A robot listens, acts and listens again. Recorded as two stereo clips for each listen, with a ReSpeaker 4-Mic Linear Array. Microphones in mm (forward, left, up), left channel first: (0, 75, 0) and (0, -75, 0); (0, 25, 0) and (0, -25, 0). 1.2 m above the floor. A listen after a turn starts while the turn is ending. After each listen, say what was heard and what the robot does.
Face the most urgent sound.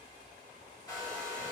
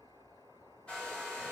Keep listening.
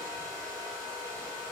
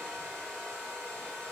Keep listening.
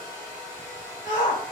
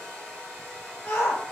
The shout: about 60° left or 120° left. Turn 60° left.
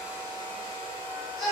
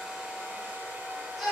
Found it: a shout, straight ahead.